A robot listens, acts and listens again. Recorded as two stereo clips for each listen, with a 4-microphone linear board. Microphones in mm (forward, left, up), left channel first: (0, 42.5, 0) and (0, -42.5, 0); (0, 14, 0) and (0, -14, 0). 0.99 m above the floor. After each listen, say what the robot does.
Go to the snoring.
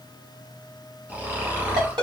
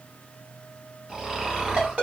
Turn 25° right.
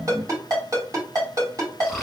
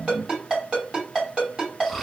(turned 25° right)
Drive 1.0 m forward.
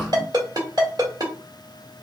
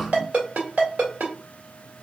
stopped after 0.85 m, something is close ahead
Keep listening.
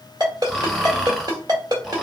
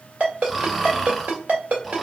Arrived at the snoring, straight ahead.